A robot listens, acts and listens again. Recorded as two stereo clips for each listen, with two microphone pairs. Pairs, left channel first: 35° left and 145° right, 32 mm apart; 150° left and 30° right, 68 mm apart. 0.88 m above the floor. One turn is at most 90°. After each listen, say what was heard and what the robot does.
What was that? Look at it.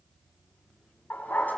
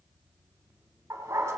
The dog barking: 15° left. Turn 15° left.
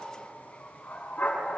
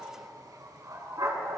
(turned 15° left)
The dog barking is now 10° left. Turn 10° left.
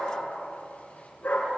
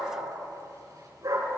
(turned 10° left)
The dog barking is now 10° left. Turn 10° left.
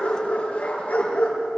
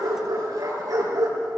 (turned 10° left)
Facing the dog barking, over 4 m away.